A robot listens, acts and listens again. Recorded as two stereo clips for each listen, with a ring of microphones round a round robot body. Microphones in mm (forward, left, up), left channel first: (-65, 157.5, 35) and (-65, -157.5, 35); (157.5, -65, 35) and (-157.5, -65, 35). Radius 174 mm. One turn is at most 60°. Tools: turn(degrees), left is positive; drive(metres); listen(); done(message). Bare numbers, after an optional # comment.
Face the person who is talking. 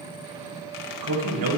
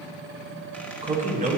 # The man speaking: 115° right.
turn(-60)
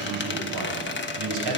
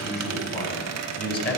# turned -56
# The man speaking is now 60° right.
turn(-60)
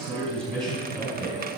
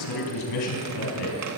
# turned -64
done("Facing the man speaking.")